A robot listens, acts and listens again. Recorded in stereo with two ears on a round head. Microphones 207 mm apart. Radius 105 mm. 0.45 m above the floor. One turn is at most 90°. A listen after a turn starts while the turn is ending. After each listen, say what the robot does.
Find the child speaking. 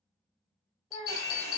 Turn 30° left.
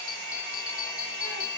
Keep listening.
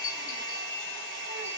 Keep listening.
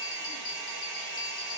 I heard a child speaking, but can't make it out now. It was about 30° right or 150° left.